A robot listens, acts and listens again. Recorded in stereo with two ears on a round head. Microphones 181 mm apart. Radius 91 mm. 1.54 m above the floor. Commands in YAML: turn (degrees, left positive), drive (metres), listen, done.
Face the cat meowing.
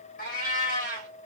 turn: 45
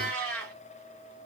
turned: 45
done: "Found it: a cat meowing, straight ahead."